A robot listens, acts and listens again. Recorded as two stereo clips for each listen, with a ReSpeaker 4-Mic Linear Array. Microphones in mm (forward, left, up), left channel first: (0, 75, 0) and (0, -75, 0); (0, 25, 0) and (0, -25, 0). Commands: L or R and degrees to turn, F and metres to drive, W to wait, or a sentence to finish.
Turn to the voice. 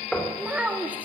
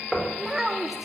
R30
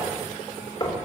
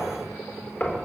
W
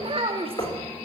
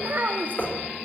R140
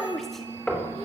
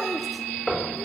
Found it: a child speaking, straight ahead, 2 to 4 m away.